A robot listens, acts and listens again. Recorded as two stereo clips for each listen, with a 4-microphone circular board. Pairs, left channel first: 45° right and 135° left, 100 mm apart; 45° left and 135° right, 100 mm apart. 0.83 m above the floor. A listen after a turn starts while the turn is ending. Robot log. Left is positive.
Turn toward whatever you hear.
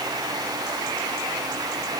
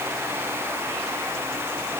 cmd idle
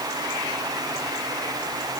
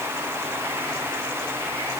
cmd idle
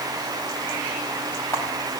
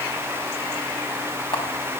note: The camera shutter: 15° left.
cmd yaw +15
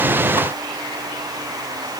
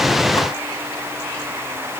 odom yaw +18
cmd idle
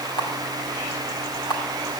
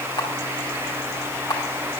end: Facing the camera shutter.